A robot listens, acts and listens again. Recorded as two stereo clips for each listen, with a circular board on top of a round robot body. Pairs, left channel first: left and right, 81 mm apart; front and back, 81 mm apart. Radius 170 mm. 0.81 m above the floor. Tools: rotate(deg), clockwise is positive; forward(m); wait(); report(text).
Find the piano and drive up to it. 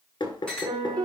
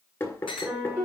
rotate(110)
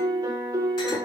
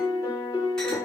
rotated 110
rotate(40)
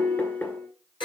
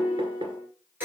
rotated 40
rotate(10)
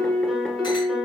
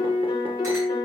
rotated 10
forward(1.0)
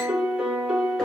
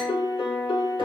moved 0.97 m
forward(1.0)
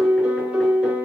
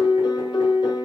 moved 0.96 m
rotate(15)
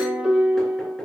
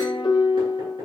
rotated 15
forward(1.0)
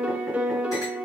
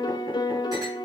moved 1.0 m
rotate(15)
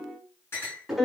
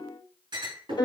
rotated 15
forward(1.0)
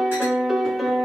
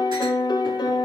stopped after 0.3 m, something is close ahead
report("I am next to the piano.")